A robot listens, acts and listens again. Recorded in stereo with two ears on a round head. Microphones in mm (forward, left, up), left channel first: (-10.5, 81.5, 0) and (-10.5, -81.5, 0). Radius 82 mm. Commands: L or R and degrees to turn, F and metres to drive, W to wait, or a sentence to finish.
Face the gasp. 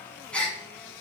L30
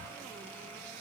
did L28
W
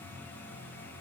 I heard a gasp, but can't make it out now. It was about 20° right or 145° left.